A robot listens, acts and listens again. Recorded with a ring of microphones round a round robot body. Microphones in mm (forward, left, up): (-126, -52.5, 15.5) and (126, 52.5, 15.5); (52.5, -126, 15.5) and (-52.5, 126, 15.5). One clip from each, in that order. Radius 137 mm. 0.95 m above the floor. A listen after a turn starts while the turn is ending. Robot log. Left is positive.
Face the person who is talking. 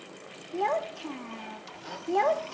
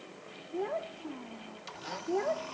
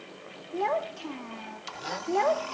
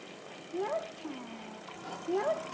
note: The child speaking: 125° right.
cmd yaw -125
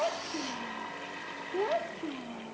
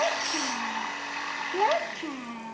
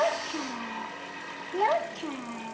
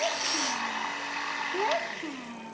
end: Facing the child speaking.